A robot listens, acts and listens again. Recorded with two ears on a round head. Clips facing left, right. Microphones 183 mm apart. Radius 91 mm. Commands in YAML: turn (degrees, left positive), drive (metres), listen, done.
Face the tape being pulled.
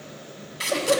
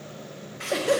turn: 50
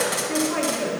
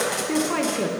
done: "Facing the tape being pulled."